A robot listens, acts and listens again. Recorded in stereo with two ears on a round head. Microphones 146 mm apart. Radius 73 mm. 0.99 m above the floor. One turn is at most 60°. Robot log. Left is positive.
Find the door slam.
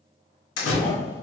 cmd yaw +60
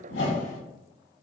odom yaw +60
note: Nothing new. It was at 30° left.
cmd yaw +30
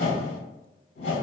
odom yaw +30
end: Facing where the door slam came from. I can't hear it now.